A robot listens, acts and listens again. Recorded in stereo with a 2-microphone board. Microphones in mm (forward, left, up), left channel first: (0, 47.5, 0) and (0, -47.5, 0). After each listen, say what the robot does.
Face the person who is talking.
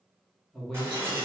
Turn 30° left.
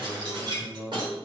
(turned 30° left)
Turn 25° right.
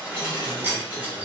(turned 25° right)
Keep listening.
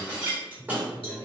Turn 15° left.
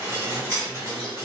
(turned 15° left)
Keep listening.
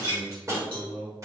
Found it: a man speaking, straight ahead.